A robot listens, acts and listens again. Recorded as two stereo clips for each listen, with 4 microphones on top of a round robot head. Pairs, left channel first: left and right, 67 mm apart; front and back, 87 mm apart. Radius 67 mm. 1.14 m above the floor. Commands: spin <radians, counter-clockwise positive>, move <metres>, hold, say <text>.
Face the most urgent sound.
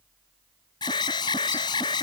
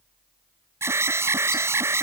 spin 2.09
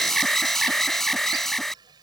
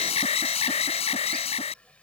say Facing the alarm.